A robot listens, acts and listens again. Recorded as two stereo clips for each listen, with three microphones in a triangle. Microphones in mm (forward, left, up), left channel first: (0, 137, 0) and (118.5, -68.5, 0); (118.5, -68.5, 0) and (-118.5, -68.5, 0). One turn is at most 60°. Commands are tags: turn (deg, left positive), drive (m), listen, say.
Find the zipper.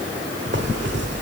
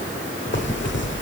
<turn deg="-30"/>
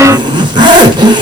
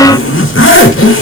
<turn deg="10"/>
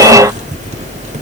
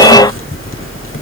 <say>Found it: a zipper, straight ahead.</say>